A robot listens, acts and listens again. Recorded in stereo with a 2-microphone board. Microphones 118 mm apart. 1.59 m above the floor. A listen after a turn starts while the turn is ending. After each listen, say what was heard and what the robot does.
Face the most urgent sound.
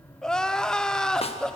Turn 30° left.
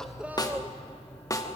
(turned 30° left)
Keep listening.
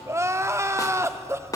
So it is at 25° right. Turn 25° right.
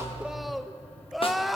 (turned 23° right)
Found it: crying, straight ahead.